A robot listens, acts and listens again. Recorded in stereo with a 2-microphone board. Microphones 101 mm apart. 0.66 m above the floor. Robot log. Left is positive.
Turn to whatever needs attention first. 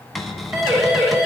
note: The siren: about 30° right or 150° right.
cmd yaw -30
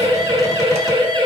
note: So it is at 115° right.
cmd yaw -115
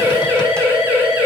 note: The siren is now 20° right.
cmd yaw -20
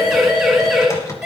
end: Found it: a siren, straight ahead, over 4 m away.